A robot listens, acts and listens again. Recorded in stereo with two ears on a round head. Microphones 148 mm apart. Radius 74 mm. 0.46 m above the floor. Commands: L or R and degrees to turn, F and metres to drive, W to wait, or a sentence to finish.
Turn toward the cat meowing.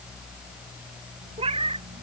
R35
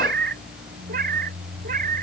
R125
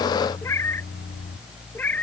L10
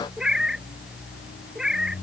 Facing the cat meowing.